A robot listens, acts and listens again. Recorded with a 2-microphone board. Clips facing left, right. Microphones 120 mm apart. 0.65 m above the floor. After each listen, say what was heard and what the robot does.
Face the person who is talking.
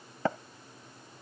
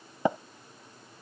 Keep listening.
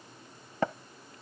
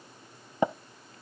Keep listening.
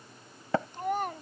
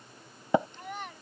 The child speaking: about 45° left or 135° left. Turn 45° left.
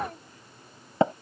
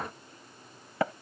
Keep listening.
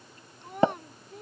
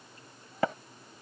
So it is at 100° left. Turn 100° left.
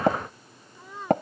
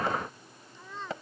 The child speaking is now 10° left. Turn 10° left.
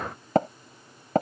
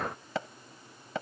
Keep listening.
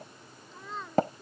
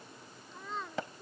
Facing the child speaking.